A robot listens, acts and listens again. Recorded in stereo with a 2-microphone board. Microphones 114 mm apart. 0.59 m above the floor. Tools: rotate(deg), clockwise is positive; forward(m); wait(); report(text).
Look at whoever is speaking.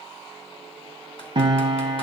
wait()
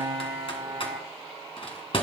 wait()
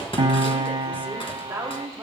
rotate(25)
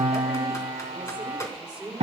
rotate(30)
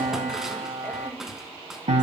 wait()
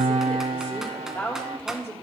rotate(-20)
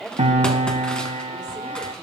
rotate(-10)
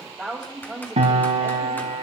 report("Found it: a woman speaking, straight ahead.")